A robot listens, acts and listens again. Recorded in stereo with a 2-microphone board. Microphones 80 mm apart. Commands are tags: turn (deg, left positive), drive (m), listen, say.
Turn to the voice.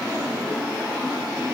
<listen/>
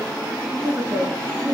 <turn deg="-30"/>
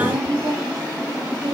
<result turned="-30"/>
<turn deg="-120"/>
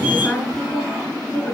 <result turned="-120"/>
<turn deg="10"/>
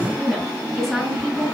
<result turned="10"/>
<say>Facing the woman speaking, over 4 m away.</say>